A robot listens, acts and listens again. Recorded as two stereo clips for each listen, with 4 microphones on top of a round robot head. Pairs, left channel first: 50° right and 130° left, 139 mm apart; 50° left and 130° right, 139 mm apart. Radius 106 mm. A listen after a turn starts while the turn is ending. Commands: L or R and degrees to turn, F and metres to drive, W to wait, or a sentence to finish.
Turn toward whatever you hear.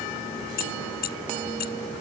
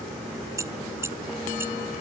R55
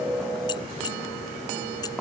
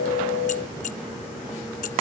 L15
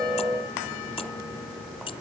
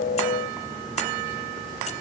W
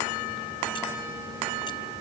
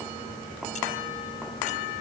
W
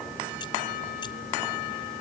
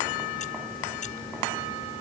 Facing where the keys jangling came from. I can't hear it now.